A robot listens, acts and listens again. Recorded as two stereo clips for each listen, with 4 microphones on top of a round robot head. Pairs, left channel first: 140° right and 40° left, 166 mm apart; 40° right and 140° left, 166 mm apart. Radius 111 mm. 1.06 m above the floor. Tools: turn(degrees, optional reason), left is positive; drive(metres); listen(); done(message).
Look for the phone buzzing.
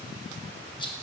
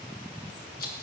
listen()
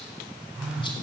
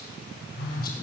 turn(degrees=-45, reason="The phone buzzing: 45° right.")
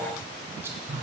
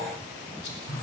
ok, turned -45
done("Facing the phone buzzing.")